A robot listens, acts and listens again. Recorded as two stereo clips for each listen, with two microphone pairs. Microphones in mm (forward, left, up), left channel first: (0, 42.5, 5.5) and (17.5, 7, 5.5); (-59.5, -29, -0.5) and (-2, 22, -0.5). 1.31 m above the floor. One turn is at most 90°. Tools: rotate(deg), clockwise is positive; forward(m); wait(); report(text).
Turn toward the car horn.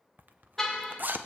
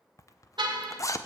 rotate(-30)
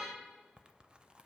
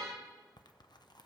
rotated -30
report("Facing the car horn, 2 to 4 m away.")